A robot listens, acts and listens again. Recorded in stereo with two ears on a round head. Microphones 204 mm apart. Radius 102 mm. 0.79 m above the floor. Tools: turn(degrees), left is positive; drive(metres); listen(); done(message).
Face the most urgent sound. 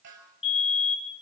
turn(degrees=25)
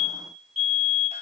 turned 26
done("Found it: a fire alarm, straight ahead, over 4 m away.")